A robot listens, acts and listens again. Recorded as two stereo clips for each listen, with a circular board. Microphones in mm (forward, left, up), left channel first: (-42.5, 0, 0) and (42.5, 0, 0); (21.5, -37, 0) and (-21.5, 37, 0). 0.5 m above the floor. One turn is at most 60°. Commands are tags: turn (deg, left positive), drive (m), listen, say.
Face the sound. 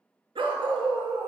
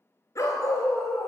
<say>Facing the dog barking, 1 to 2 m away.</say>